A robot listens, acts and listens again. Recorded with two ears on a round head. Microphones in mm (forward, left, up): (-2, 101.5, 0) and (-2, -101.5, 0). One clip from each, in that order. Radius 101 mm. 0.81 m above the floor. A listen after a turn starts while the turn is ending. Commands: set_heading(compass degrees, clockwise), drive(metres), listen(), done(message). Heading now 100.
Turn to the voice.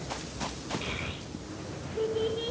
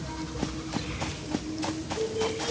set_heading(55)
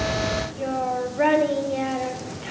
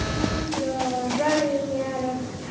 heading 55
set_heading(325)
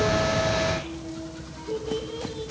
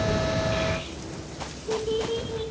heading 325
done("Facing the child speaking.")